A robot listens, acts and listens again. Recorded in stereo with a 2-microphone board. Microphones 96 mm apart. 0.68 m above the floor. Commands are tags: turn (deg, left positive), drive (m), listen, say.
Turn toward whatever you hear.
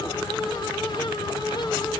<listen/>
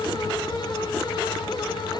<listen/>
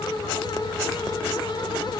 <say>I can't make out anything to turn to.</say>